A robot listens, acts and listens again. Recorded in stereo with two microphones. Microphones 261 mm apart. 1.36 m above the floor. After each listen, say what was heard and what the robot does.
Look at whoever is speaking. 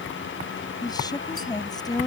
Turn 30° left.
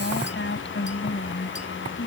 So it is at 135° left. Turn 135° left.
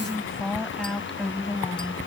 Facing the woman speaking.